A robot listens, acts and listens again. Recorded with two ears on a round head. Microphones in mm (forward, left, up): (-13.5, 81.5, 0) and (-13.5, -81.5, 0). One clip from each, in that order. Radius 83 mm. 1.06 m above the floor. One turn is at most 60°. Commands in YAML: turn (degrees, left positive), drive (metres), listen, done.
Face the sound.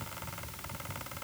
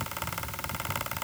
listen: true
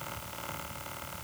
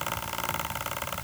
listen: true
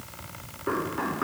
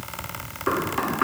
turn: -60
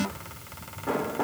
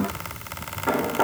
turn: -50
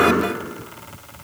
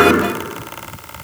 done: "Facing the knocking."